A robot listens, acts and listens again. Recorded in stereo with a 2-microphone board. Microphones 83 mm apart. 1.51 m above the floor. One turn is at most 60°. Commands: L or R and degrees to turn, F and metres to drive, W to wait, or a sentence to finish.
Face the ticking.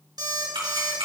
R60
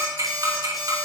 R45
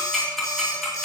Facing the ticking, 2 to 4 m away.